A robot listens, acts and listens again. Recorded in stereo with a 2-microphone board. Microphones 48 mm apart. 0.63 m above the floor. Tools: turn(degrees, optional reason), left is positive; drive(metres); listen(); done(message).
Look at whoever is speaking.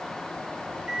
listen()
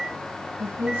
turn(degrees=-30, reason="The woman speaking: about 30° right or 150° right.")
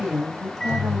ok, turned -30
turn(degrees=-110, reason="So it is at 110° right.")
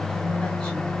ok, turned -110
listen()
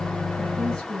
done("Found it: a woman speaking, straight ahead.")